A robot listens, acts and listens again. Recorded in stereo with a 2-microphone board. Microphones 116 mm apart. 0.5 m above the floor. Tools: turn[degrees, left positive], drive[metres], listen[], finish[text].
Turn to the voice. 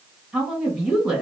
Action: turn[30]
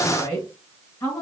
Thought: So it is at 150° left.
Action: turn[150]
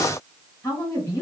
Thought: The woman speaking is now 25° left.
Action: turn[25]
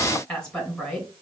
Action: finish[Facing the woman speaking, 2 to 4 m away.]